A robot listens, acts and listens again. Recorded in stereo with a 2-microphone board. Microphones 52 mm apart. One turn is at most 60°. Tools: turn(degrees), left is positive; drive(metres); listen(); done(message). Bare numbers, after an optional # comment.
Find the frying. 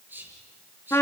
listen()
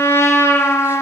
listen()
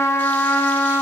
done("I can't make out frying to turn to.")